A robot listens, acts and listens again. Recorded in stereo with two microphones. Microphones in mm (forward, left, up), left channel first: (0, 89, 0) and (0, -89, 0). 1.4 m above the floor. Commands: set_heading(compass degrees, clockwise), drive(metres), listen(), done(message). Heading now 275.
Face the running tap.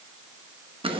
listen()
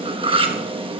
listen()
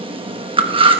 done("I can't make out a running tap to turn to.")